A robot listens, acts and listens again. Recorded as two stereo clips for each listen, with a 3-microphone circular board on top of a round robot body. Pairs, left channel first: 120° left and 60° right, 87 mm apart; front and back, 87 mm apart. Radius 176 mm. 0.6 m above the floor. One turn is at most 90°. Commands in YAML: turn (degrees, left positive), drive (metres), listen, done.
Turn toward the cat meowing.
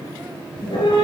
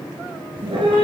turn: 90
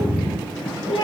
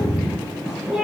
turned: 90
turn: 90
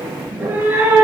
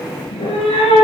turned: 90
turn: 10
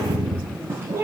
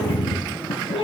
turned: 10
done: "Facing the cat meowing."